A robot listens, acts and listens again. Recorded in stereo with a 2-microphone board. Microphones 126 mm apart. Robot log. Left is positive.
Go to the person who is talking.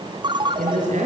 note: The woman speaking: about 75° right or 105° right.
cmd yaw -75
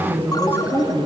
note: So it is at 15° right.
cmd yaw -15
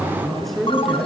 cmd fwd 1.0
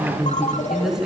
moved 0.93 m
cmd fwd 1.0
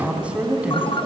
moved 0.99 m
note: The woman speaking is now 10° right.
cmd yaw -10
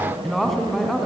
cmd fwd 1.0
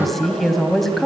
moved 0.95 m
cmd fwd 1.0
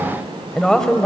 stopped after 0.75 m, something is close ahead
end: I am next to the woman speaking.